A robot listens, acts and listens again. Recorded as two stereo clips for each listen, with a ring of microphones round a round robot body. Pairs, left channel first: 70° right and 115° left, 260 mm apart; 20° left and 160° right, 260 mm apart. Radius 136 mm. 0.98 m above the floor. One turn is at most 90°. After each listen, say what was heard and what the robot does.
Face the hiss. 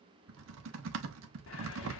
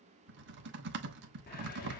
The hiss: 30° right. Turn 30° right.
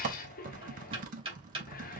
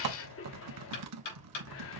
The hiss is now 10° right. Turn 10° right.
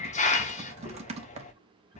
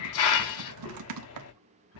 Facing the hiss, under 1 m away.